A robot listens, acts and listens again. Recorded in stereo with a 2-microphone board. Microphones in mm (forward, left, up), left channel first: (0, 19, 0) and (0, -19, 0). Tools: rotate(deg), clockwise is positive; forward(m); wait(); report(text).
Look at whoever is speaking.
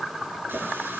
wait()
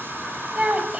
rotate(35)
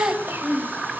rotate(100)
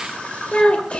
rotate(-30)
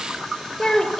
rotate(-20)
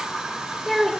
report("Found it: a child speaking, straight ahead, 2 to 4 m away.")